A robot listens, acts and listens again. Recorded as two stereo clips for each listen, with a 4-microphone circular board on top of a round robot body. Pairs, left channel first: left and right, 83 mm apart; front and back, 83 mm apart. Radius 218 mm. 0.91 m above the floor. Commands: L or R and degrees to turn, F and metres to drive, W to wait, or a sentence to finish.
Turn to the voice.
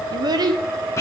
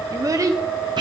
R130
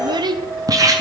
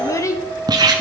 R55
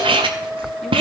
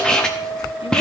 W
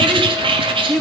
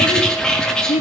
Found it: a child speaking, straight ahead, 1 to 2 m away.